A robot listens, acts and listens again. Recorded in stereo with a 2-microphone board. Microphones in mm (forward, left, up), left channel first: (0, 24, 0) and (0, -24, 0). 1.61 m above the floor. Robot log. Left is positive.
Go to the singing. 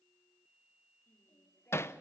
note: The singing: about 45° left or 135° left.
cmd yaw +45
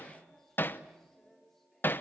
cmd fwd 1.0
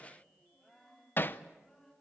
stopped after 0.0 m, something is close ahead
note: The singing is now 10° left.
cmd yaw +10
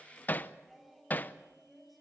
end: Something is in my way. I am facing the singing but have not reached it.